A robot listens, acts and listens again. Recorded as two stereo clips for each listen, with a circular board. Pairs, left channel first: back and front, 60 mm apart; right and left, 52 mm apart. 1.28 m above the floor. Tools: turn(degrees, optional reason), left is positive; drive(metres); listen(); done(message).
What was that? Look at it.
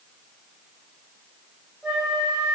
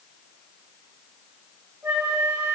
turn(degrees=75, reason="The flute: 75° left.")
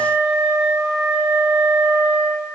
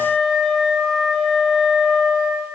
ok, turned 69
done("Found it: a flute, straight ahead, 1 to 2 m away.")